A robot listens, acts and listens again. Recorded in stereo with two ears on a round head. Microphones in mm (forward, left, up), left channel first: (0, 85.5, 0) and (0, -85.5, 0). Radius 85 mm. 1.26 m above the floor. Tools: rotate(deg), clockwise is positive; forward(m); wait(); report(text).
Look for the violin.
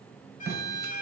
rotate(-45)
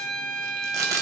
report("Facing the violin.")